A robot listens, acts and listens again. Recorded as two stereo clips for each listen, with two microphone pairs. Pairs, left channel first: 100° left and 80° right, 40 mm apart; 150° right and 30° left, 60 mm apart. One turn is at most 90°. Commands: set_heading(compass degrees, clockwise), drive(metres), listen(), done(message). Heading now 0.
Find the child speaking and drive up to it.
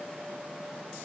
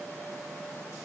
listen()
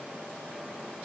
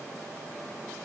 listen()
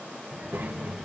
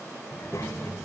set_heading(90)
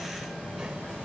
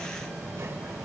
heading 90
set_heading(100)
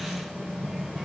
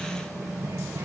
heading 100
drive(1.0)
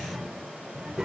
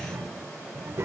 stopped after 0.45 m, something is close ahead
done("Something is in my way. I am facing the child speaking but have not reached it.")